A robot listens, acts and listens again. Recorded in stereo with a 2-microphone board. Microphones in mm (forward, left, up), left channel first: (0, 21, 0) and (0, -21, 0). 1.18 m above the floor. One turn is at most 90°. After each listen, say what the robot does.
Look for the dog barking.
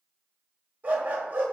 Turn 40° right.
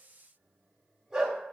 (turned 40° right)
Turn 15° right.
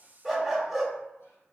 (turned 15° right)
Facing the dog barking.